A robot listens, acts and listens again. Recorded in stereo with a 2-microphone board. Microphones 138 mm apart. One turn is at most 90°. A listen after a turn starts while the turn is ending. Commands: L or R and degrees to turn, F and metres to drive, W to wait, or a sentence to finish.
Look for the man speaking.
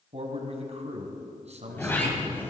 R55
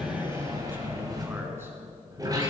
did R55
W
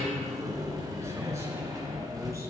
W
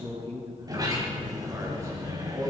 R25
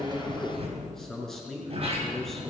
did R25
Facing the man speaking.